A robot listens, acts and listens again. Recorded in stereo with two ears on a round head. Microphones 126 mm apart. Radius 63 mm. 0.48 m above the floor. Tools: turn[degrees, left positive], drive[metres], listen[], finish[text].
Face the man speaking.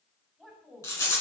Action: turn[30]
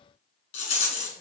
Action: listen[]
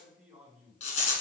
Thought: So it is at 10° right.
Action: turn[-10]
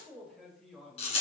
Action: finish[Found it: a man speaking, straight ahead.]